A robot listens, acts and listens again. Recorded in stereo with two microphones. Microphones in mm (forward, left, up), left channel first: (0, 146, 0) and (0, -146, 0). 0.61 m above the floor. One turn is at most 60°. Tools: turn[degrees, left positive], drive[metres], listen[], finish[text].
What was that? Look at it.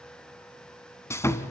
Action: turn[30]
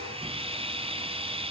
Thought: So it is at 20° right.
Action: turn[-20]
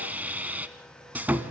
Action: finish[Facing the sawing.]